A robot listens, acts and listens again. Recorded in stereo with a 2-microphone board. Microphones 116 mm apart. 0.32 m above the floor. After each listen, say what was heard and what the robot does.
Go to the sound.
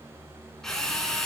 Turn 30° left.
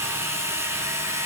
So it is at 25° right. Turn 25° right.
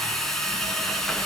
Drive 1.0 m forward.
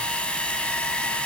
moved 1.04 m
The drill is now 10° left. Turn 10° left.
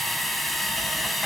Drive 1.0 m forward.
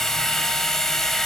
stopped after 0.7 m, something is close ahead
Arrived at the drill, straight ahead.